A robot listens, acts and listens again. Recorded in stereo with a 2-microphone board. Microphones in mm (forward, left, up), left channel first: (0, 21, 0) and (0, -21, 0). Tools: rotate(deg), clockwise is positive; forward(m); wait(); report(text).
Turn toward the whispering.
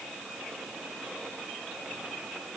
wait()
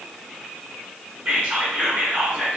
rotate(35)
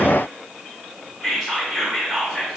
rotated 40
report("Facing the whispering.")